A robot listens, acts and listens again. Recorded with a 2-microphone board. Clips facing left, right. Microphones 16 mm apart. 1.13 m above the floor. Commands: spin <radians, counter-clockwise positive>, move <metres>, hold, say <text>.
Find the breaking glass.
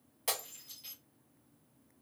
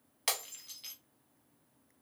spin -0.70
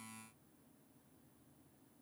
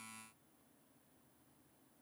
hold
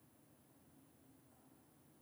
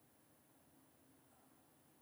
say I heard breaking glass, but can't make it out now. It was about straight ahead or 100° right.